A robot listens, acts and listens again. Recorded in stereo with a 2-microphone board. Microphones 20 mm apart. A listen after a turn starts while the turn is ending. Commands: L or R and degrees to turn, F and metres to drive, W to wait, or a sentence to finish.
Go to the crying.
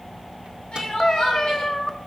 L75
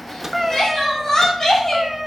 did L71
L35
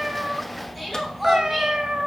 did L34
W
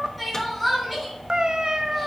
F1.0
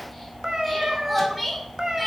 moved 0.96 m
F1.0
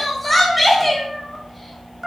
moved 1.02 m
F1.0
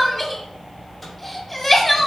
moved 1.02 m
L10
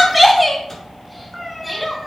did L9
F1.0
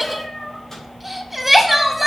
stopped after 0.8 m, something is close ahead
R10
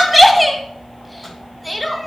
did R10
Arrived at the crying, straight ahead.